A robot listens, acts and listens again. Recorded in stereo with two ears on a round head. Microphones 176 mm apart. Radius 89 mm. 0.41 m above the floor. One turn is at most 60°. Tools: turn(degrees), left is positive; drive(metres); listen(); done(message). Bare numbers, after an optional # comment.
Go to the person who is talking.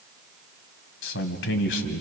# The man speaking: about 65° left or 115° left.
turn(60)
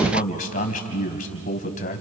# So it is at 45° left.
turn(45)
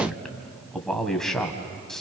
drive(1.0)
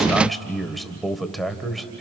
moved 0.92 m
drive(1.0)
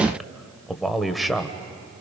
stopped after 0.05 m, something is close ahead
done("Arrived at the man speaking, straight ahead.")